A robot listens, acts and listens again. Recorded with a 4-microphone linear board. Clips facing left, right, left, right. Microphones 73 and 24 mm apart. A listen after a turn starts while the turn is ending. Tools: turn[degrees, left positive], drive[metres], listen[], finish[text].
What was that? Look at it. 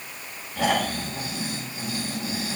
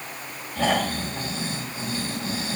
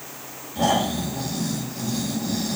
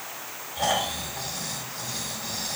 Action: turn[30]
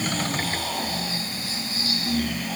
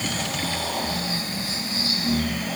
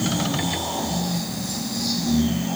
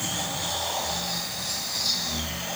Thought: So it is at 20° right.
Action: turn[-20]
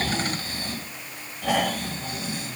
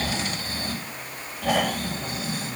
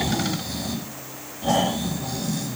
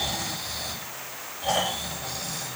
Action: finish[Found it: snoring, straight ahead.]